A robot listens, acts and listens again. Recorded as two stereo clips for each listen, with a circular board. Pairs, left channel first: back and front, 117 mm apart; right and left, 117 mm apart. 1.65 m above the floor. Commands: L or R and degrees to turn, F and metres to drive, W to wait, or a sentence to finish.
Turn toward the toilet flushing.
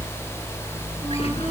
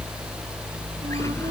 W
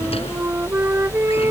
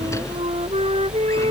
W
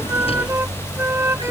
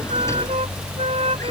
I can't make out a toilet flushing, only a flute.